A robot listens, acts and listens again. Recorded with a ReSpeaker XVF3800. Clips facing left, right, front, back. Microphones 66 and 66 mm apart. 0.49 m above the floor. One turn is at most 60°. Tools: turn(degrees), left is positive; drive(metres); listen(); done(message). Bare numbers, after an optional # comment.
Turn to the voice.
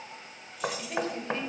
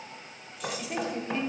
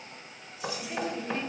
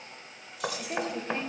# The woman speaking: 170° right.
turn(-60)
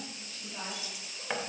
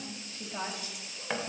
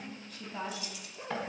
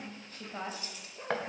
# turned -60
# The woman speaking is now 130° right.
turn(-60)
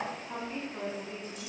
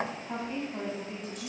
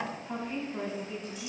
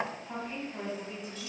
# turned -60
# The woman speaking is now 95° right.
turn(-60)
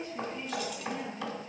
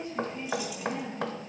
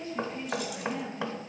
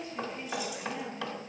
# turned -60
# The woman speaking is now 45° right.
turn(-45)
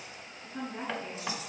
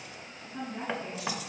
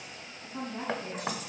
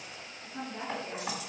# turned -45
done("Facing the woman speaking, over 4 m away.")